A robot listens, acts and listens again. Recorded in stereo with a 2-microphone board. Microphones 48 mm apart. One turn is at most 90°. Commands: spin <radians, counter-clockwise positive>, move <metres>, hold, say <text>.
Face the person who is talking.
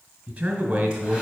spin -0.70
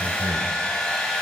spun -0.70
hold
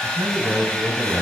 spin -1.57
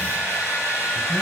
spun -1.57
spin -0.17
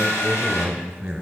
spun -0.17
spin -0.35
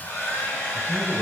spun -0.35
say Found it: a man speaking, straight ahead, 2 to 4 m away.